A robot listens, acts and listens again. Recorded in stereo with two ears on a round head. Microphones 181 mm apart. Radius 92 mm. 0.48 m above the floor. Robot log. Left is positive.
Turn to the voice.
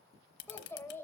cmd yaw +30
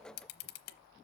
cmd idle
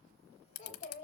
note: So it is at 135° left.
cmd yaw +135
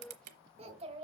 note: The child speaking is now 30° right.
cmd yaw -30
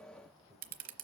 end: Found it: a child speaking, straight ahead.